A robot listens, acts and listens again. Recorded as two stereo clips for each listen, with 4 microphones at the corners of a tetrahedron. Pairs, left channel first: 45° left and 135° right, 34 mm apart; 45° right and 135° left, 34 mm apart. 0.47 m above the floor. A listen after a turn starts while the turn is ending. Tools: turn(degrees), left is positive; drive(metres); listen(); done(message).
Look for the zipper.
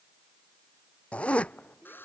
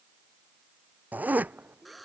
turn(degrees=100)
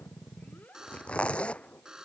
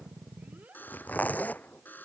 turn(degrees=-10)
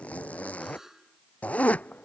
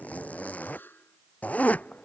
done("Facing the zipper.")